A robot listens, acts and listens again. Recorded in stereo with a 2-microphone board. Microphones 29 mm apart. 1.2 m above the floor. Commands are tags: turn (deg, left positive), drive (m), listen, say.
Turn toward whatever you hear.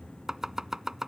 <turn deg="-15"/>
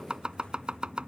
<turn deg="-145"/>
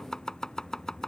<turn deg="20"/>
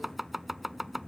<say>Facing the chopping.</say>